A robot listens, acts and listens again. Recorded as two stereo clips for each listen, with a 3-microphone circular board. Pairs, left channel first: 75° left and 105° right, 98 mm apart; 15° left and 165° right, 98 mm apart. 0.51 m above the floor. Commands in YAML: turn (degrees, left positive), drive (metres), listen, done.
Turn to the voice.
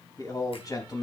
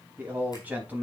turn: 120
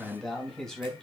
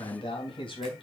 turn: -10
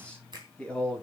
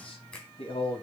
done: "Found it: a man speaking, straight ahead, 2 to 4 m away."